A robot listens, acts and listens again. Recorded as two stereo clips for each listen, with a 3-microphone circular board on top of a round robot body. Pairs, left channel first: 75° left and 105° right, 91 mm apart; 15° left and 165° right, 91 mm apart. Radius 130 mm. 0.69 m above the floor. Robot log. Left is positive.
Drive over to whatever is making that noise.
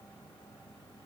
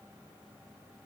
cmd idle
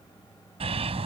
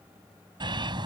note: The bird: 125° right.
cmd yaw -125
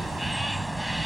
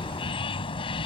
note: The bird is now 15° right.
cmd yaw -15
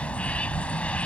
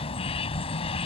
cmd fwd 1.0
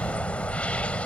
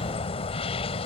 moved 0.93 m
cmd fwd 1.0
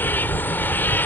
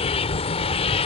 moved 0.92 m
cmd fwd 1.0
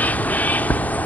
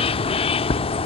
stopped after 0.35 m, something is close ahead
end: I am next to the bird.